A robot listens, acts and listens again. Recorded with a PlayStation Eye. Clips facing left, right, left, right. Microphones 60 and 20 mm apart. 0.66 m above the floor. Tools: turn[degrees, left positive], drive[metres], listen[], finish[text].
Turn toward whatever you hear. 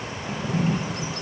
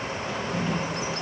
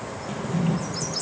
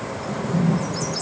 Thought: The drawer: about 45° left or 135° left.
Action: turn[45]
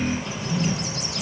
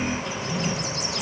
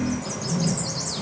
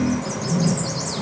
Action: finish[Found it: a drawer, straight ahead, 2 to 4 m away.]